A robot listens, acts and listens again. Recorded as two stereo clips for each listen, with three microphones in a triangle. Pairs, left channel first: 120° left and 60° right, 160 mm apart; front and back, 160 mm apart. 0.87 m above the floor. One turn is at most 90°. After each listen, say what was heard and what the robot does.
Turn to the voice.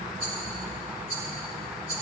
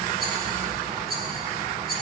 Keep listening.
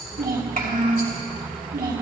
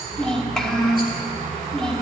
The child speaking: 85° right. Turn 85° right.
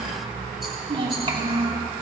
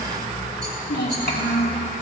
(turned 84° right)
Found it: a child speaking, straight ahead.